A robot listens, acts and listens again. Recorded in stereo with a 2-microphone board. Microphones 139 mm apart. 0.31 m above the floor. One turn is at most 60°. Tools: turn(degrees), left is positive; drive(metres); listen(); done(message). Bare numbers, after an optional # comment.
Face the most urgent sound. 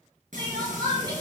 # The crying: about 30° right or 150° right.
turn(-30)
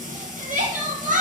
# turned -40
# So it is at 110° right.
turn(-60)
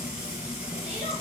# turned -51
# Nothing new. It was at 60° right.
turn(-60)
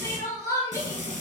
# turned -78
# The crying is now 20° left.
turn(20)
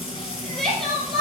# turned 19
done("Found it: crying, straight ahead, 2 to 4 m away.")